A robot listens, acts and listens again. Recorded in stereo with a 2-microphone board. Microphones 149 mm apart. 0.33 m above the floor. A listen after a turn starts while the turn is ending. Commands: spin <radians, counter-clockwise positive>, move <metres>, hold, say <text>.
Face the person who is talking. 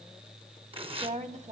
spin -0.96
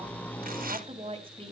spin -0.79
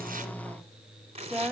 say Facing the woman speaking.